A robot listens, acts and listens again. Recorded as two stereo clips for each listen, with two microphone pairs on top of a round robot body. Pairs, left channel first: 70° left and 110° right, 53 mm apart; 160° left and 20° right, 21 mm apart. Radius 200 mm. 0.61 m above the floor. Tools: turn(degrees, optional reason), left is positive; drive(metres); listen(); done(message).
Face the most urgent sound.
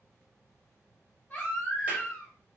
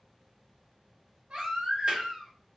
done("Found it: a baby crying, straight ahead, 1 to 2 m away.")